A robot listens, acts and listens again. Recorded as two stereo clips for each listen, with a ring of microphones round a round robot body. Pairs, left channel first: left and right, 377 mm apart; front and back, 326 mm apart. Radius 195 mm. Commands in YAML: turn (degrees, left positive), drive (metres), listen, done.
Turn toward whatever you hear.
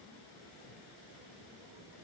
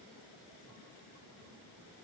listen: true
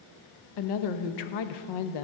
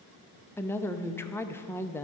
turn: 85
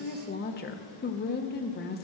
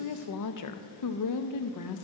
turn: 25
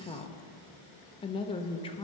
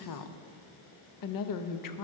turn: 15
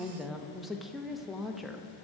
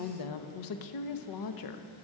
done: "Facing the woman speaking, under 1 m away."